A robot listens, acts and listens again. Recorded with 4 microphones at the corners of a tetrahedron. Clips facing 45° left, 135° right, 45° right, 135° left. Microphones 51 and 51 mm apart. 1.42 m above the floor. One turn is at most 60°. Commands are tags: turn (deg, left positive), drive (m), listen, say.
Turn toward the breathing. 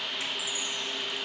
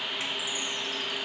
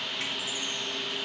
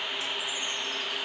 <listen/>
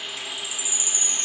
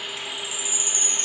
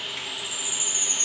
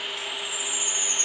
<listen/>
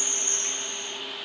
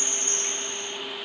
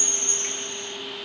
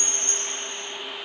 <say>I can't make out breathing to turn to.</say>